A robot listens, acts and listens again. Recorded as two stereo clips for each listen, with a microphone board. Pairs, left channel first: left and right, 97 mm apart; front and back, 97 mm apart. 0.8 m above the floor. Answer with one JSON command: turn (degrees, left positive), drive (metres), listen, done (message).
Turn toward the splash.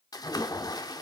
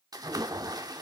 {"turn": 135}
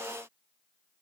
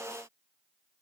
{"done": "Facing where the splash came from. I can't hear it now."}